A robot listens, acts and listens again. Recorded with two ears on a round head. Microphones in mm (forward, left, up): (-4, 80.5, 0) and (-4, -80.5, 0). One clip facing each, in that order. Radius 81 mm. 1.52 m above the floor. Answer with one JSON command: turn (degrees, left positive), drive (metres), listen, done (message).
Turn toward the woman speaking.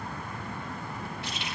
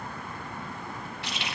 {"listen": true}
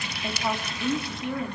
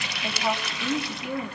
{"turn": -30}
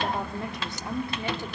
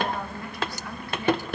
{"turn": 20}
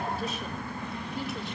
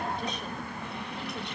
{"listen": true}
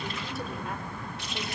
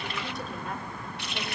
{"listen": true}
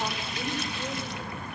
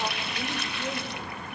{"done": "Facing where the woman speaking came from. I can't hear it now."}